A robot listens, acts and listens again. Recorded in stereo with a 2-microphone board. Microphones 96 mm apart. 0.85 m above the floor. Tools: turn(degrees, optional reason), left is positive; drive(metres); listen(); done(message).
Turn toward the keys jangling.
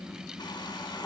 listen()
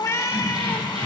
turn(degrees=-90)
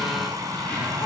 turn(degrees=15, reason="So it is at 15° left.")
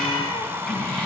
turn(degrees=10, reason="The keys jangling is now 10° left.")
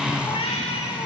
listen()
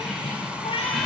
done("Facing the keys jangling, over 4 m away.")